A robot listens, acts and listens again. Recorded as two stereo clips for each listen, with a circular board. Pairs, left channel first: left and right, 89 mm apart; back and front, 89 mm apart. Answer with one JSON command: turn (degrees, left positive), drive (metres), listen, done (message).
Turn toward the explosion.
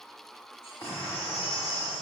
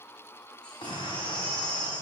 {"turn": 155}
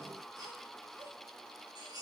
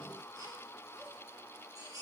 {"done": "Facing where the explosion came from. I can't hear it now."}